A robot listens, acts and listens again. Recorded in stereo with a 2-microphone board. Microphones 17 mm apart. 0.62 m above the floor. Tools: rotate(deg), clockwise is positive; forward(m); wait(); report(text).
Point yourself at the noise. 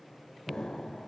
rotate(-70)
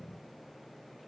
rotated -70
wait()
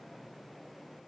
report("I heard an explosion, but can't make it out now. It was about straight ahead or 40° left.")